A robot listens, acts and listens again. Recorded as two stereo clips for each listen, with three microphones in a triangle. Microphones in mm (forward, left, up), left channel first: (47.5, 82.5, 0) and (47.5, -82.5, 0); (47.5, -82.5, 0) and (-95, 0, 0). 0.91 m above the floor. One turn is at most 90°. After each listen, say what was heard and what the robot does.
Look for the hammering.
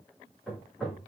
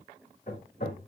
Found it: hammering, straight ahead, 2 to 4 m away.